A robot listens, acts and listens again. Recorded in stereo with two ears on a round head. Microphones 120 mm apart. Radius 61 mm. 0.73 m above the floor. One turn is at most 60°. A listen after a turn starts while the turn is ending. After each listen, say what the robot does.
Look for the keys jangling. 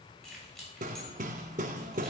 Turn 30° left.
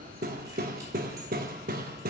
Keep listening.
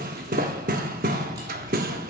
Keep listening.
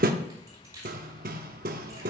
Turn 25° right.
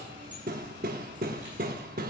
Keep listening.
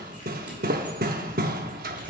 Keep listening.
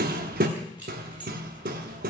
Turn 10° right.
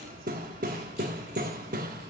Keep listening.
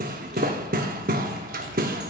Keep listening.
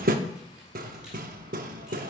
I heard keys jangling from this way, but can't make it out now.